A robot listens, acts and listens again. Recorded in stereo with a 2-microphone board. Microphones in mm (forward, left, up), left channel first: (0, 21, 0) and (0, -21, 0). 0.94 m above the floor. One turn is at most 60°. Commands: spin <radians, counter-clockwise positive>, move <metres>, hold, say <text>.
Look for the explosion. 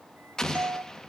spin 0.52
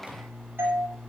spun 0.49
hold
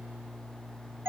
say I heard an explosion, but can't make it out now. It was about 15° right or 135° left.